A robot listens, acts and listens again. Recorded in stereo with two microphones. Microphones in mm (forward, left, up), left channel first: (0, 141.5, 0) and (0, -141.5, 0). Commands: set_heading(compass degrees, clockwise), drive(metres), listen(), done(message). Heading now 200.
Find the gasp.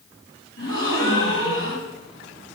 set_heading(150)
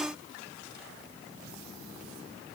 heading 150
listen()
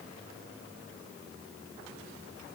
done("I heard a gasp, but can't make it out now. It was about straight ahead or 80° left.")